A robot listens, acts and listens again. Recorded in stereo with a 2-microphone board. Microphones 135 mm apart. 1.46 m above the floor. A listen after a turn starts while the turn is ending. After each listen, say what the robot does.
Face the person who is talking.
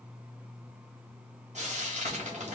Keep listening.
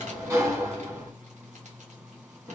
Keep listening.
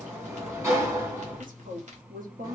Turn 90° right.
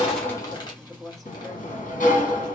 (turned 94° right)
Facing the woman speaking.